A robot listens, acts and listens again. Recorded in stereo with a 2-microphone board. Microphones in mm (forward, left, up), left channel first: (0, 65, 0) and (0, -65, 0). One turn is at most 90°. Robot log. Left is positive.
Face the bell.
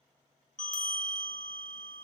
cmd yaw +90
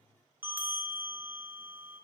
note: So it is at 15° right.
cmd yaw -15
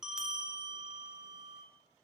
end: Facing the bell, under 1 m away.